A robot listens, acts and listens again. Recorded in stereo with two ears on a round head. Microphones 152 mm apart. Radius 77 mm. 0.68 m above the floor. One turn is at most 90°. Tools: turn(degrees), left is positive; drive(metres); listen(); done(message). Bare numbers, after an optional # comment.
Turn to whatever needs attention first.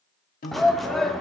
turn(30)
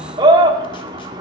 # So it is at 30° right.
turn(-30)
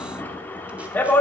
# The shout is now 10° left.
turn(10)
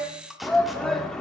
done("Facing the shout.")